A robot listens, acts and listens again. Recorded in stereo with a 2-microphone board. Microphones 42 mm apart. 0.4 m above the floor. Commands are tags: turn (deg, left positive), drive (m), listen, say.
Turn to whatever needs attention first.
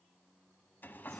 <listen/>
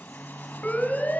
<turn deg="40"/>
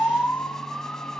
<turn deg="95"/>
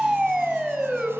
<say>Facing the siren, 2 to 4 m away.</say>